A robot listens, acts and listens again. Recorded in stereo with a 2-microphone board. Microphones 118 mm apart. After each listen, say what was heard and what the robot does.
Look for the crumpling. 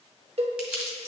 Turn 30° right.
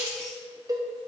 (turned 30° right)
So it is at 140° right. Turn 140° right.
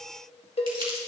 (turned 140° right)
The crumpling is now 50° right. Turn 50° right.
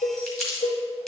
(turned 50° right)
Facing the crumpling.